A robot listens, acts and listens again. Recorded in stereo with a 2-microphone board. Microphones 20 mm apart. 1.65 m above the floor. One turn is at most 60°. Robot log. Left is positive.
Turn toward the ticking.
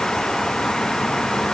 cmd idle
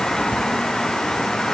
cmd idle
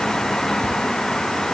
end: I can't make out ticking.